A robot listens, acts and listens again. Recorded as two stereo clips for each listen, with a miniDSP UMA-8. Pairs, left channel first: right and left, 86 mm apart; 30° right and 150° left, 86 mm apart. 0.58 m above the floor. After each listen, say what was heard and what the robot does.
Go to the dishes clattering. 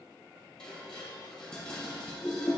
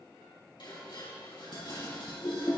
The dishes clattering: 10° right. Turn 10° right.
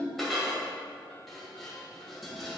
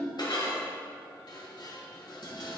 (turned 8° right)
Drive 1.0 m forward.
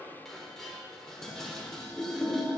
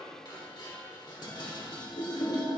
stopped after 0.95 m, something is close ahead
Arrived at the dishes clattering, straight ahead.